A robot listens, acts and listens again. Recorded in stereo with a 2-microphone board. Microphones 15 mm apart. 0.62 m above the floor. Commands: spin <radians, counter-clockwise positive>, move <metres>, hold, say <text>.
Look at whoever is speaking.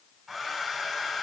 hold
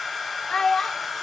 spin 0.96
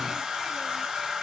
hold
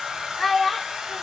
spin 0.17
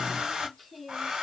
hold
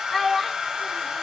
say Found it: a child speaking, straight ahead, under 1 m away.